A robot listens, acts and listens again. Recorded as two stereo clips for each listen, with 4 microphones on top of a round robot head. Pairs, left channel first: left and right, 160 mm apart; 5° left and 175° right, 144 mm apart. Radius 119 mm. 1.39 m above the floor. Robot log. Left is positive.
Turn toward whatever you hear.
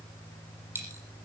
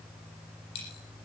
note: The dropped coin: 15° right.
cmd yaw -15
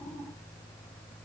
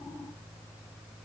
end: Facing where the dropped coin came from. I can't hear it now.